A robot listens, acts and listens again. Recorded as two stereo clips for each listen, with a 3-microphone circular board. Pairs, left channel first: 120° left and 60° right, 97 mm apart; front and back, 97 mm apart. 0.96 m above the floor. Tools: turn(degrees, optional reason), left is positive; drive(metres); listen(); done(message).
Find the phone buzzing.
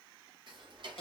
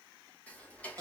listen()
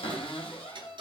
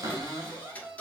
listen()
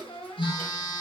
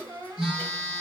turn(degrees=95, reason="The phone buzzing: 95° left.")
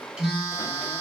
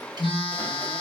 turn(degrees=30, reason="The phone buzzing is now 30° left.")
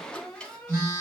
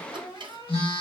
done("Facing the phone buzzing, 2 to 4 m away.")